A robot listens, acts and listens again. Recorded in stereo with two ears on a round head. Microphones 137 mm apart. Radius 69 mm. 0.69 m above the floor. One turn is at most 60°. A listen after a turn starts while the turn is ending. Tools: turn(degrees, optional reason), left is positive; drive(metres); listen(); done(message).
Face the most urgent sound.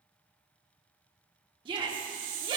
turn(degrees=-30, reason="The shout: about 30° right or 150° right.")
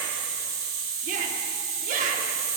turn(degrees=-60, reason="So it is at 115° right.")
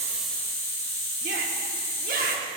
turn(degrees=-60, reason="The shout is now 75° right.")
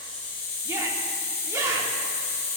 turn(degrees=-20, reason="The shout is now 20° right.")
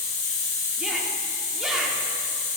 listen()
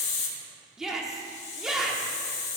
done("Found it: a shout, straight ahead, 1 to 2 m away.")